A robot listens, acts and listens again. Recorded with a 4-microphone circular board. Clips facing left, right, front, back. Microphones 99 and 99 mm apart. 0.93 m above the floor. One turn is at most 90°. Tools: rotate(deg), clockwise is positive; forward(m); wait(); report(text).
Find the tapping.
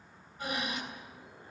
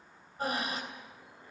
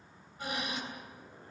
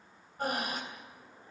wait()
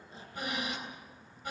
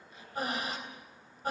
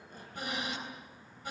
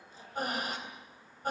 wait()
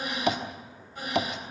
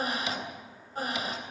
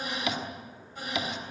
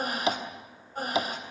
rotate(-90)
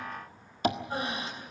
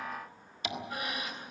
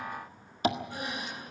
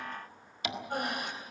rotate(-50)
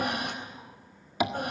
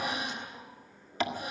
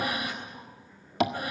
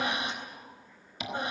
rotate(-15)
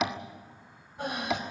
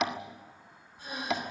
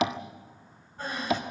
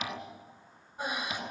report("Facing the tapping, 1 to 2 m away.")